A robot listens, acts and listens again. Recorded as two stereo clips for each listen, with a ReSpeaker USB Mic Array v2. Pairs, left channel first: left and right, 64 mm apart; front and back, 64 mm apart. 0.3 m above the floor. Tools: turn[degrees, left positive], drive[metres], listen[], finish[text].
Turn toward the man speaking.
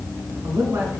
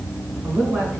Thought: The man speaking: 125° right.
Action: turn[-125]
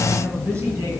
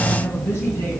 Thought: The man speaking is now 50° right.
Action: turn[-50]
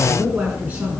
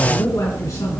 Thought: The man speaking is now 25° right.
Action: turn[-25]
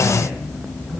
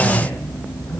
Action: listen[]
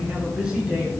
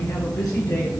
Thought: The man speaking is now 10° right.
Action: turn[-10]
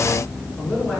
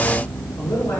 Action: finish[Found it: a man speaking, straight ahead.]